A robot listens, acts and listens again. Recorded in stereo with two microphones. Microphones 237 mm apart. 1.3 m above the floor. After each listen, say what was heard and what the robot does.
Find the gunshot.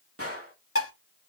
The gunshot: about 70° right or 110° right. Turn 70° right.
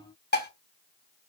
Keep listening.
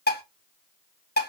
I heard a gunshot, but can't make it out now. It was about straight ahead or 40° right.